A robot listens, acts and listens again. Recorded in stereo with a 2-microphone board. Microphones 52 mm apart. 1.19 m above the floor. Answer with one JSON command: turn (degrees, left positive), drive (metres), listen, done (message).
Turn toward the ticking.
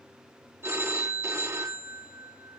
{"listen": true}
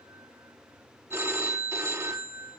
{"listen": true}
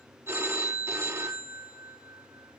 {"done": "I can't make out ticking to turn to."}